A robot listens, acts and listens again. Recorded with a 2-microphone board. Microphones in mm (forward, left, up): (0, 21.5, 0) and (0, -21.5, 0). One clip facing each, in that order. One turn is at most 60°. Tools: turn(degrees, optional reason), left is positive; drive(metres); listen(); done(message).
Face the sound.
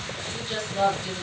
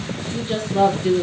turn(degrees=-40, reason="The woman speaking: about 40° right or 140° right.")
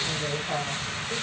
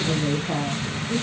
done("Found it: a woman speaking, straight ahead, over 4 m away.")